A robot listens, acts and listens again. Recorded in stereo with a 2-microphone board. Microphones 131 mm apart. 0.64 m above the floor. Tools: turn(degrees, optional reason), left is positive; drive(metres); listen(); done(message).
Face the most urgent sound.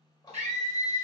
turn(degrees=-60, reason="The scream: about 60° right or 120° right.")
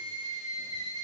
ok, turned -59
turn(degrees=-35, reason="So it is at 35° right.")
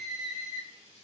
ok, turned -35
done("Found it: a scream, straight ahead, 1 to 2 m away.")